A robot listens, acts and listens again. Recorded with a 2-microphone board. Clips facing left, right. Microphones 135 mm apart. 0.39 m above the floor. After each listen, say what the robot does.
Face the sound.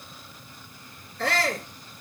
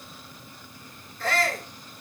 Turn 90° left.
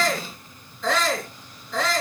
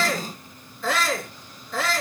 Found it: a shout, straight ahead.